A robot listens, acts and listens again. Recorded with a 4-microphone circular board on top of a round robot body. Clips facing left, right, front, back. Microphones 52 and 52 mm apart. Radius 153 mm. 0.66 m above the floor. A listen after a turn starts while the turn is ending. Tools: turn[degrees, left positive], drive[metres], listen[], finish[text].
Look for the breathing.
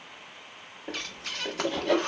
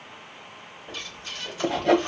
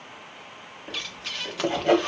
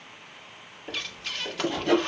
Thought: The breathing: 85° left.
Action: turn[85]
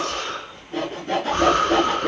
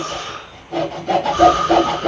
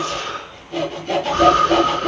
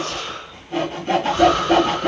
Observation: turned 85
Thought: The breathing is now 40° left.
Action: turn[40]
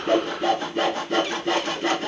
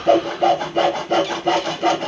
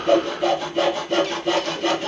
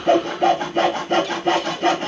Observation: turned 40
Action: listen[]
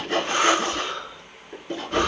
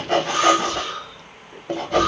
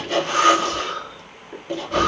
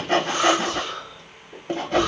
Thought: The breathing is now 20° left.
Action: turn[20]
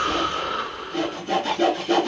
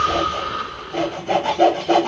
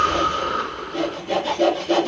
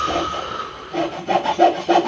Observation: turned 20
Action: finish[Facing the breathing.]